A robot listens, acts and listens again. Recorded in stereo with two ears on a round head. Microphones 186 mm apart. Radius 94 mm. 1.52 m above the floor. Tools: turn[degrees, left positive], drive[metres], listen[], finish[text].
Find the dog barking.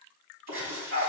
Thought: The dog barking: about 50° right or 130° right.
Action: turn[-50]
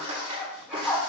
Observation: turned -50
Thought: So it is at 10° right.
Action: turn[-10]
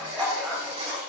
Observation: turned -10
Action: finish[Facing the dog barking, 2 to 4 m away.]